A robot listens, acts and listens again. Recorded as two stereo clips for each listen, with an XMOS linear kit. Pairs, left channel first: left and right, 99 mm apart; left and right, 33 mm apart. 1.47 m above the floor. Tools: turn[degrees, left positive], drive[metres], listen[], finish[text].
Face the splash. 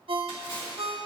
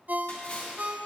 Thought: The splash: about 55° left or 125° left.
Action: turn[55]
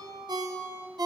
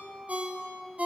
Action: listen[]
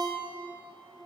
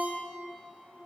Action: finish[I heard a splash, but can't make it out now. It was about straight ahead or 70° left.]